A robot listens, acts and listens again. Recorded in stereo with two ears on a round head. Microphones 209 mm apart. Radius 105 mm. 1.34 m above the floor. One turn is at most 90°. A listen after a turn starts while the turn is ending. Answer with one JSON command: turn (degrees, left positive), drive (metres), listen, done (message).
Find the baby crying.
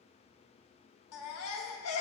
{"turn": 75}
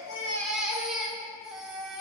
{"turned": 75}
{"done": "Facing the baby crying."}